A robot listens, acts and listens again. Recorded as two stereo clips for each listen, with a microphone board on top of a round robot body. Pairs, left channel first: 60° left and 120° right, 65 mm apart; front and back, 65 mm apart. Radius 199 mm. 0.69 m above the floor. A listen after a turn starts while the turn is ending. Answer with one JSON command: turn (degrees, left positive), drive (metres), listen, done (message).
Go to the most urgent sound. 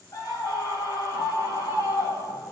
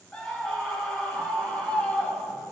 {"turn": 70}
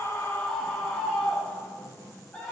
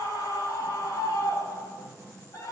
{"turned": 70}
{"turn": -25}
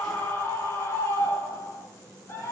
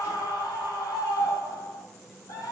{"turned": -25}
{"drive": 1.0}
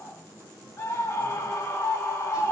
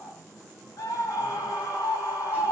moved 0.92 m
{"turn": 10}
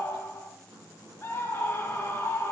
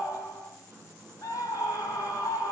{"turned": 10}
{"drive": 1.0}
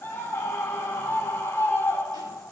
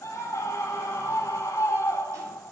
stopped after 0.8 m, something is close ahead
{"done": "I am next to the scream."}